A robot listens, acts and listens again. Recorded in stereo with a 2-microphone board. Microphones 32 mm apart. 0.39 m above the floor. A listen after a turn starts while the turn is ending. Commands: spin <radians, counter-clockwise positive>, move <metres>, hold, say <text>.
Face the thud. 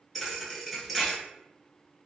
spin 0.52
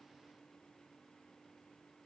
hold
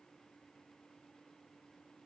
say I heard a thud, but can't make it out now. It was about 30° right or 150° left.